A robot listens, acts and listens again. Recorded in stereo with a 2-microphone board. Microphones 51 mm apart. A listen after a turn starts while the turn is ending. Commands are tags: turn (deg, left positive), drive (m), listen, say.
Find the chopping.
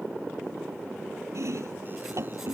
<turn deg="-65"/>
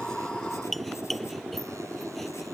<say>Found it: chopping, straight ahead.</say>